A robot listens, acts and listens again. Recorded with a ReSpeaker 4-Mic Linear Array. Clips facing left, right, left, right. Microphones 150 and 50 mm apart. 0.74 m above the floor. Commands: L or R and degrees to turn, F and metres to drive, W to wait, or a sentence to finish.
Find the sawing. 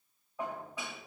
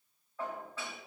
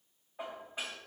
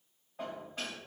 W
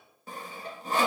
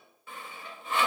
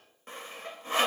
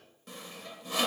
L40
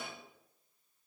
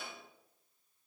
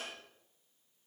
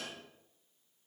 W
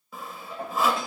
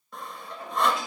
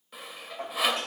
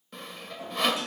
Facing the sawing, under 1 m away.